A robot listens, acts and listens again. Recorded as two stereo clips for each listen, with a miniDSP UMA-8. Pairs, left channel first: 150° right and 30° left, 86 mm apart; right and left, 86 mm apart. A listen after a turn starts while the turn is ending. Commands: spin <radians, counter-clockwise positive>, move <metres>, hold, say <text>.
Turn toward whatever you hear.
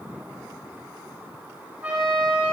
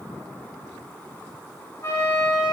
spin -0.79
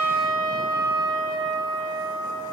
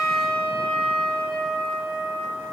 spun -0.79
spin -0.17
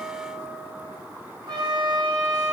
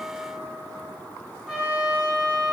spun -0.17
say Found it: a trumpet, straight ahead, over 4 m away.